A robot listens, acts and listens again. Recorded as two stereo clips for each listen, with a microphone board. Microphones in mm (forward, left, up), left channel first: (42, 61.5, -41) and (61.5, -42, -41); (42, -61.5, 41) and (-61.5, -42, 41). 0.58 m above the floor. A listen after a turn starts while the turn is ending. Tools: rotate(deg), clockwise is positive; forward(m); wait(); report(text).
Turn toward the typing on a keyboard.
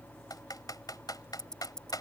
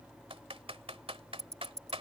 rotate(-150)
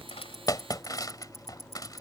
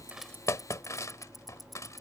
rotate(-50)
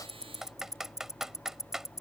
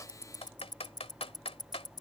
report("Facing the typing on a keyboard.")